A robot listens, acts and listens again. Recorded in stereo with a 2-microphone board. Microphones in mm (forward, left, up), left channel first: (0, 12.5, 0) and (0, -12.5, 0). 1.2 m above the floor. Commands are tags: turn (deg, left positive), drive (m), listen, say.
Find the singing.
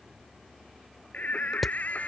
<turn deg="90"/>
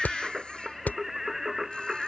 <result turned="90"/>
<turn deg="-15"/>
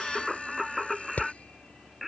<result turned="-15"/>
<say>Facing the singing.</say>